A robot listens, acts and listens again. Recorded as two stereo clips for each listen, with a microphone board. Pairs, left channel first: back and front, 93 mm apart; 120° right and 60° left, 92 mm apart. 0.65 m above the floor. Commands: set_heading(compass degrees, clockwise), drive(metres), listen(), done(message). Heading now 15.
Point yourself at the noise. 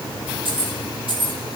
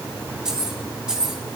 set_heading(35)
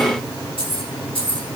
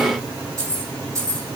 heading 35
done("Facing the keys jangling, over 4 m away.")